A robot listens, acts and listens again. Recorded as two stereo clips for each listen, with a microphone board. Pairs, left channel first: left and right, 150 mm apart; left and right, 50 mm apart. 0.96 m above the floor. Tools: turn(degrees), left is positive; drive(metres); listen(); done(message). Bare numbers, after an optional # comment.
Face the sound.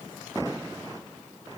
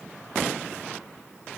listen()
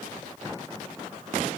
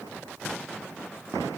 listen()
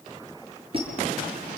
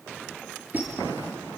# The squeak: about 40° right or 140° right.
turn(-40)
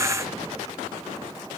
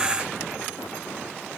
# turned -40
listen()
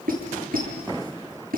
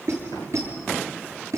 # So it is at 100° right.
turn(-100)
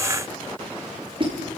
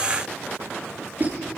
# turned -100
# The squeak is now 35° right.
turn(-35)
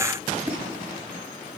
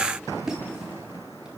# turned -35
# The squeak is now 10° right.
turn(-10)
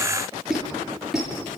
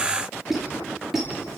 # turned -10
done("Facing the squeak, over 4 m away.")